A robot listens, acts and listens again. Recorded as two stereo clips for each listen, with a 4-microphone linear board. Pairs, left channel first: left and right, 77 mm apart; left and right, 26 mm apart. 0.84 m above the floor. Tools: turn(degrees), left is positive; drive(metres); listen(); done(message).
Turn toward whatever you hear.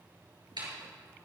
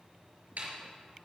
turn(degrees=-90)
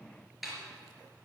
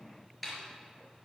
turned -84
done("Found it: a snare drum, straight ahead.")